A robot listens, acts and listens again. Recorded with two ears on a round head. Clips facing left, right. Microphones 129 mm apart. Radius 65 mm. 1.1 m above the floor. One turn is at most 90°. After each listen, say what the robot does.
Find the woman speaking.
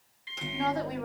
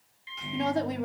Turn 25° right.
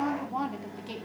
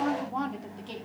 Turn 10° left.
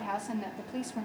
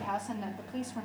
Turn 20° left.
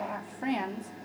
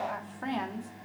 Turn 20° left.
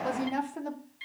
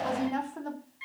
Turn 15° left.
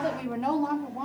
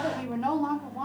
Turn 10° left.
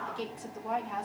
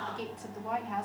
Facing the woman speaking.